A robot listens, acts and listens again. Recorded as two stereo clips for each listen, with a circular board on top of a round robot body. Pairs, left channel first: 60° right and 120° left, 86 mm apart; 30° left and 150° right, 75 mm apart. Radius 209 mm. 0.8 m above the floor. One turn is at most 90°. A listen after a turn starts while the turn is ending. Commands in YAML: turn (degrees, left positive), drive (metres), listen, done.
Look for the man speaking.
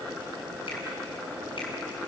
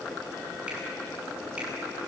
listen: true
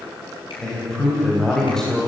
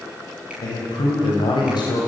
turn: 25
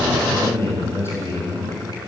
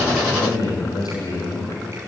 done: "Found it: a man speaking, straight ahead, over 4 m away."